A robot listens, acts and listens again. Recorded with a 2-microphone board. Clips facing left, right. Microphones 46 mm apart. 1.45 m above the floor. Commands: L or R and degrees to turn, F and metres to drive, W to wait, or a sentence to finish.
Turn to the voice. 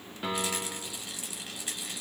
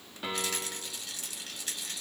W
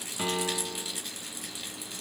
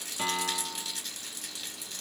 W
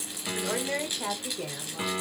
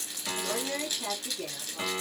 L50
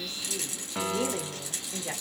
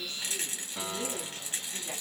L85
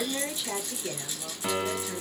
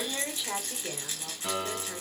Facing the woman speaking.